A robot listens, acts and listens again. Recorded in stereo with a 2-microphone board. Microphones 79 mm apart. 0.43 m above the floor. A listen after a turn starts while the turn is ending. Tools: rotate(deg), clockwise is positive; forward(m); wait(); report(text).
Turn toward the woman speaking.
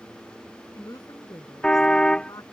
rotate(-55)
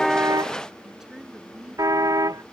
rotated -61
rotate(10)
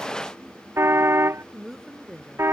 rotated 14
report("Found it: a woman speaking, straight ahead.")